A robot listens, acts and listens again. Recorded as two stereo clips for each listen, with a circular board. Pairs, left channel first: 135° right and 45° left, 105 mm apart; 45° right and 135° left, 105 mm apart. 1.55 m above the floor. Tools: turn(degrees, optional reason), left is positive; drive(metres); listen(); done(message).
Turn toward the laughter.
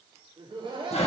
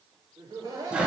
turn(degrees=85, reason="The laughter: 85° left.")
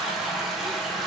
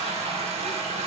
listen()
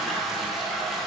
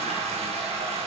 listen()
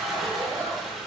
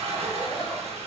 done("I heard laughter from this way, but can't make it out now.")